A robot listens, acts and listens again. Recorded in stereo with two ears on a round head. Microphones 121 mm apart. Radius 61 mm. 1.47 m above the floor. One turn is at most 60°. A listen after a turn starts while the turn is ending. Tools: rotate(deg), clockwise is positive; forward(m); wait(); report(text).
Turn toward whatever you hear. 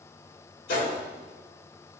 rotate(-60)
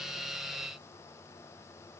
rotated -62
rotate(-30)
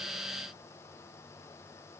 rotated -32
report("Facing where the gunshot came from. I can't hear it now.")